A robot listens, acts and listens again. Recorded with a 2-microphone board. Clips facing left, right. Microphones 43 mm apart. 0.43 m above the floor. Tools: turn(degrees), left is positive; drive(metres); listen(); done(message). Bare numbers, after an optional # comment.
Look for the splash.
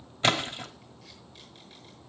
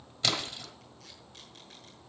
# The splash: about 35° left or 145° left.
turn(35)
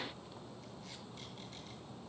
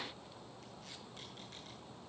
listen()
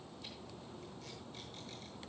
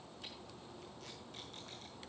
done("I heard a splash, but can't make it out now. It was about straight ahead or 110° left.")